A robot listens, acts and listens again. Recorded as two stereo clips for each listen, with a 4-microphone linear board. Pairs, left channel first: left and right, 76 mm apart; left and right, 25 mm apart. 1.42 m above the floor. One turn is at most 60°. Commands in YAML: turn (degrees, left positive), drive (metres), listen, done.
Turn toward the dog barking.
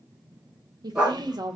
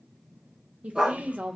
turn: -15
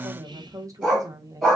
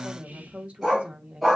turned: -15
turn: -30
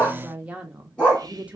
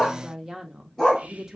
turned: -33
turn: 20
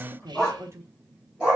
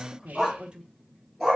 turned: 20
done: "Facing the dog barking."